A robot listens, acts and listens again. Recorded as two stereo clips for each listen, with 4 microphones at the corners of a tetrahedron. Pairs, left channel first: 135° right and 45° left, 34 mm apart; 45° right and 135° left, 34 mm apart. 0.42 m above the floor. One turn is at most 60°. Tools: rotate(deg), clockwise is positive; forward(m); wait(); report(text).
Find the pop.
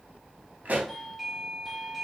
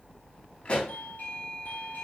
report("Facing the pop, 2 to 4 m away.")